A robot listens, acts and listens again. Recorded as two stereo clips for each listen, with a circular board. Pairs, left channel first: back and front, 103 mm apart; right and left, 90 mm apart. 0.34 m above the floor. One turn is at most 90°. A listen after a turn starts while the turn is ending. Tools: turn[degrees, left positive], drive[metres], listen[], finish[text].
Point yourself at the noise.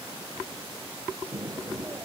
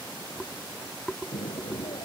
Thought: The explosion: 70° right.
Action: turn[-70]
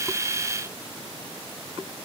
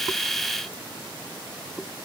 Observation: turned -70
Action: finish[I heard an explosion from this way, but can't make it out now.]